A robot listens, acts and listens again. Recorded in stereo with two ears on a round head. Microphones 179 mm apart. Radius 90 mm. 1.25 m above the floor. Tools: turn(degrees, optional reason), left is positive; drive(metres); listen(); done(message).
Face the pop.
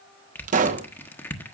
turn(degrees=-40, reason="The pop: about 40° right or 140° right.")
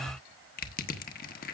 listen()
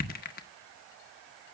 done("I heard a pop, but can't make it out now. It was about straight ahead or 100° right.")